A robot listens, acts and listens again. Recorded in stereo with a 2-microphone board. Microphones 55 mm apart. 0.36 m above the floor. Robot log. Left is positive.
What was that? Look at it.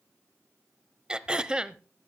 note: The throat clearing: about 15° right or 165° right.
cmd yaw -15
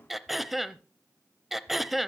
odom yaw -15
end: Found it: throat clearing, straight ahead, under 1 m away.